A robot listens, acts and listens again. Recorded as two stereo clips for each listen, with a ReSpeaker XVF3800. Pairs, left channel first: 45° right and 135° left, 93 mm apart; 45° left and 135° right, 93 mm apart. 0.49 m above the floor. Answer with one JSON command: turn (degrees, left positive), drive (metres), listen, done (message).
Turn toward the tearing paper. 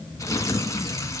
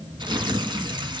{"turn": -100}
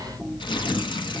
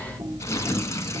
{"turn": -15}
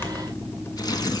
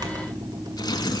{"done": "Facing the tearing paper, 1 to 2 m away."}